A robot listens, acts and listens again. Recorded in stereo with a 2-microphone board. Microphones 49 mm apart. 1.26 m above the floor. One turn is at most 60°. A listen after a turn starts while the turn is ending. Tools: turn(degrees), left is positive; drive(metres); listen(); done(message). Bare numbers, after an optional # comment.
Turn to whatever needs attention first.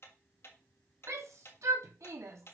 turn(-60)
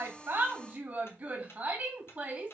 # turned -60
# So it is at 35° right.
turn(-35)
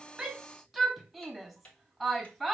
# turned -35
done("Facing the shout, 2 to 4 m away.")